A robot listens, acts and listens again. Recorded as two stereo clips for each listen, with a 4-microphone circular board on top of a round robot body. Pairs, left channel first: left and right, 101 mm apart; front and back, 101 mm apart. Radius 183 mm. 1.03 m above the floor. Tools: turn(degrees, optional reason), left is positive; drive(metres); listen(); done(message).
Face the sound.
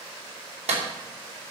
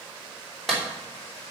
turn(degrees=-85, reason="The clap: 85° right.")
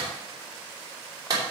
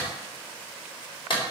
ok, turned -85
turn(degrees=-35, reason="The clap is now 35° right.")
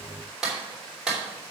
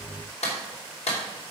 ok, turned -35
done("Facing the clap.")